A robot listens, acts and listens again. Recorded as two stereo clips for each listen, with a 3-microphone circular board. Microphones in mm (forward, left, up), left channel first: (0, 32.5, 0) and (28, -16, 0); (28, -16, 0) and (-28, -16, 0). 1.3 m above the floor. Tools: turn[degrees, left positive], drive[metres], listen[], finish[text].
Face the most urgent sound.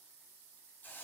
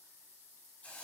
Action: listen[]
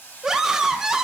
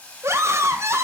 Thought: The scream: 140° right.
Action: turn[-140]
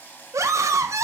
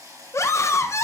Thought: The scream is now 35° right.
Action: turn[-35]
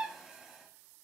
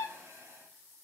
Thought: The scream is now 15° left.
Action: turn[15]
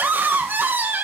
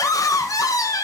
Action: finish[Facing the scream, under 1 m away.]